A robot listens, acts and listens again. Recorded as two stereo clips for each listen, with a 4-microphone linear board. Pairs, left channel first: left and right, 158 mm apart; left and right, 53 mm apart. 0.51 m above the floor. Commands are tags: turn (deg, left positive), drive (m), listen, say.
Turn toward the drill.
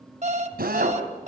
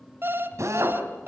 <turn deg="-70"/>
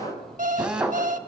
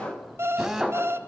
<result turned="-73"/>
<say>Found it: a drill, straight ahead, 2 to 4 m away.</say>